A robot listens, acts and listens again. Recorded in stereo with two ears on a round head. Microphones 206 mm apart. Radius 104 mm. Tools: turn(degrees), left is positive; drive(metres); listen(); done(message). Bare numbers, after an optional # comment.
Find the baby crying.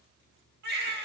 # The baby crying: about 50° right or 130° right.
turn(-50)
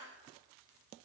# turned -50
listen()
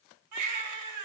# So it is at 80° right.
turn(-80)
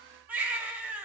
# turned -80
done("Found it: a baby crying, straight ahead, 1 to 2 m away.")